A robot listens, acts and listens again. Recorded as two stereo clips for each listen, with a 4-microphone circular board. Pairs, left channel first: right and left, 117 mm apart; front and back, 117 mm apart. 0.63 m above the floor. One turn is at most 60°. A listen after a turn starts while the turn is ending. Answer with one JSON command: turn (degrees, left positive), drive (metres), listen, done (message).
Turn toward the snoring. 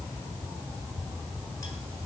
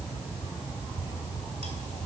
{"listen": true}
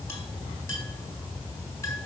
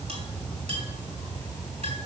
{"listen": true}
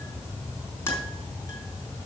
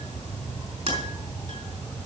{"done": "I can't make out snoring, only a clink."}